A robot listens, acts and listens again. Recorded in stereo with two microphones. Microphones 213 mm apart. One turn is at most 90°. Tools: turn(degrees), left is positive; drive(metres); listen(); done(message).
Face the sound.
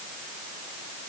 listen()
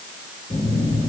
turn(degrees=40)
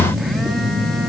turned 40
done("Facing the phone buzzing, 2 to 4 m away.")